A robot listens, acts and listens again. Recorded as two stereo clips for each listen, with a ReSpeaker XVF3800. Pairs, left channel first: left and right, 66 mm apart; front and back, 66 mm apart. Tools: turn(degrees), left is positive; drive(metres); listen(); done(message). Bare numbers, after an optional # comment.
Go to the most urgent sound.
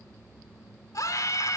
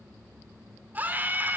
# The scream: 120° left.
turn(120)
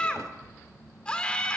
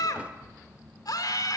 # The scream is now 15° left.
turn(15)
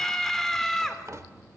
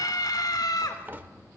drive(1.0)
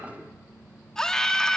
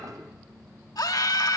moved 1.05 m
# The scream is now 10° left.
turn(10)
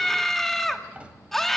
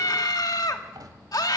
drive(1.0)
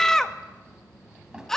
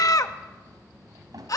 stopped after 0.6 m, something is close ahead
# The scream is now 10° left.
turn(10)
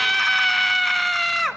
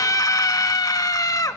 done("I am next to the scream.")